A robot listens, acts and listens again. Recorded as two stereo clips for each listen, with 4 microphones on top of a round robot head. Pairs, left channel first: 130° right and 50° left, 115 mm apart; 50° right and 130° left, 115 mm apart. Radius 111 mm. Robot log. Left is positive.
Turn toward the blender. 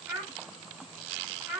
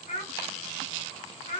cmd idle
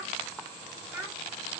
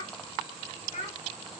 cmd idle
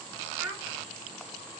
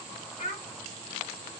end: I can't make out a blender to turn to.